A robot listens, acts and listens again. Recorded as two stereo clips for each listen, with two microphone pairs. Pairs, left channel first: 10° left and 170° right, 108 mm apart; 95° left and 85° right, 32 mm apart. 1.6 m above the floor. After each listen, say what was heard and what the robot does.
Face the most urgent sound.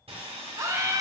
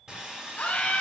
The scream: 135° left. Turn 135° left.
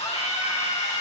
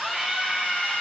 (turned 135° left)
Facing the scream, 1 to 2 m away.